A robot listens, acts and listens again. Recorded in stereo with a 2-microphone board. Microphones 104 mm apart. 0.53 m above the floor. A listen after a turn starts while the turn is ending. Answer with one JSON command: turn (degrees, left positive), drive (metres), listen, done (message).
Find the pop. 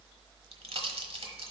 {"turn": -70}
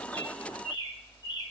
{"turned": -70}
{"listen": true}
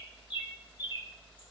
{"done": "I heard a pop, but can't make it out now. It was about straight ahead or 40° right."}